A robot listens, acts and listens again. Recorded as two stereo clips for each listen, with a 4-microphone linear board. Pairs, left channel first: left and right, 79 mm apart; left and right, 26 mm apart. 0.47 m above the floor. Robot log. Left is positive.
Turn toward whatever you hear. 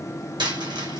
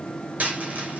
cmd yaw -90
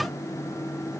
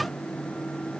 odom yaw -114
note: Nothing new. It was at 25° left.
cmd yaw +25
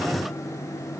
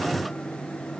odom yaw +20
end: I heard a dropped coin from this way, but can't make it out now.